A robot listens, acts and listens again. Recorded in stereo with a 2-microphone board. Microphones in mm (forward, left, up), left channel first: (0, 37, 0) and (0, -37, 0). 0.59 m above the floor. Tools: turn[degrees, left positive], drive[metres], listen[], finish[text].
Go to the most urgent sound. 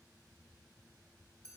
Action: listen[]
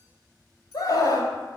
Thought: The scream: about 60° left or 120° left.
Action: turn[60]
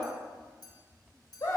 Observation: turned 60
Thought: So it is at 55° left.
Action: turn[55]
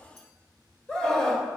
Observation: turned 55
Thought: The scream is now 15° left.
Action: turn[15]
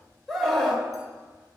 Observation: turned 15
Action: drive[1.0]
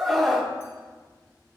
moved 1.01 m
Action: drive[1.0]
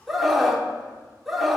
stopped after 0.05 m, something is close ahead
Action: finish[I am next to the scream.]